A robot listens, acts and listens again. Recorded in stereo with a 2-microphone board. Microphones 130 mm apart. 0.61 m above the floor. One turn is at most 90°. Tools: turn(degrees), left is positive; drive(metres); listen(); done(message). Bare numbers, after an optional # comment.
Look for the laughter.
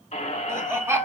# The laughter: about 20° right or 160° right.
turn(-20)
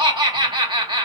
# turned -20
# So it is at 135° right.
turn(-90)
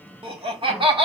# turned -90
# The laughter is now 55° right.
turn(-55)
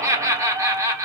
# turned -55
# The laughter is now 30° right.
turn(-30)
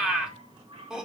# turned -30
done("Found it: laughter, straight ahead, 1 to 2 m away.")